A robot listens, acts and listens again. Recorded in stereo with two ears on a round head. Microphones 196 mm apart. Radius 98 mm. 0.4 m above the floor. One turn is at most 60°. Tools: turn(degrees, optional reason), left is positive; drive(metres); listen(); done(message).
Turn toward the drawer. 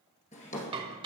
turn(degrees=35, reason="The drawer: about 35° left or 145° left.")
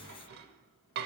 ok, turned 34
listen()
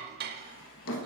turn(degrees=60, reason="So it is at 115° left.")
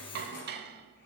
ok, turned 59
turn(degrees=55, reason="The drawer is now 55° left.")
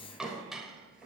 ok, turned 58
done("Found it: a drawer, straight ahead.")